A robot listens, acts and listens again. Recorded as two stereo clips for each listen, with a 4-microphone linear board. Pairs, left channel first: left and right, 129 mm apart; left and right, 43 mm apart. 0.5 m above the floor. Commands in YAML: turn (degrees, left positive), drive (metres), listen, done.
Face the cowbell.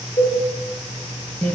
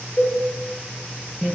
turn: 75
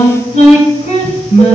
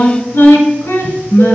listen: true
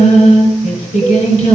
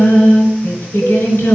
listen: true
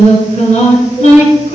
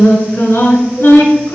done: "I heard a cowbell, but can't make it out now. It was about straight ahead or 30° left."